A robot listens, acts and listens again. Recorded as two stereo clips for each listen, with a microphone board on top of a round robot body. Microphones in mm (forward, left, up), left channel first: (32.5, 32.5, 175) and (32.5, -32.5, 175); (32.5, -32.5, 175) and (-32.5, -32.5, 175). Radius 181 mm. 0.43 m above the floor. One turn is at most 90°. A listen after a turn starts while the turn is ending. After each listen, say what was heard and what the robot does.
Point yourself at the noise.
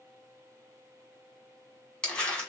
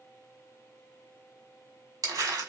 The crumpling: 170° left. Turn 90° left.
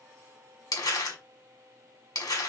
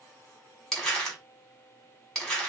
The crumpling is now 85° left. Turn 85° left.
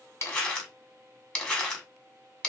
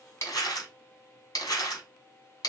The crumpling is now 20° left. Turn 20° left.
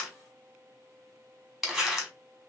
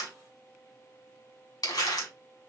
Found it: crumpling, straight ahead.